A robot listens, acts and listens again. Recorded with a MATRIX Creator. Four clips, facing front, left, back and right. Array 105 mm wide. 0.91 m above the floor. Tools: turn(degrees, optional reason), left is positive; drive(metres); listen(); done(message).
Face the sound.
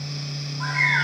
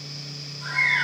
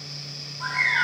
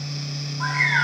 turn(degrees=-70, reason="The bird: 70° right.")
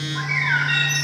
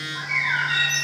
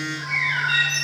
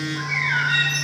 done("Found it: a bird, straight ahead, over 4 m away.")